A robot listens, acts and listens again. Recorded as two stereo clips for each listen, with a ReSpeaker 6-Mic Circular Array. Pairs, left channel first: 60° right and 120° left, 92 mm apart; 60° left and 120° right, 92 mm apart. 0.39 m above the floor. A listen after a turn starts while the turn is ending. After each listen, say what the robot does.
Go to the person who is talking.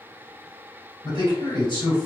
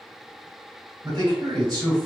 Turn 85° right.
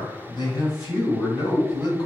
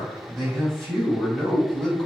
Turn 25° right.
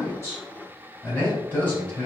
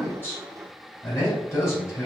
Turn 10° left.
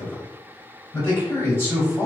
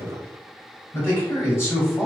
Drive 1.0 m forward.
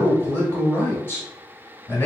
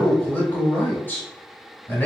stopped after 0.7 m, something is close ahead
Arrived at the man speaking, straight ahead.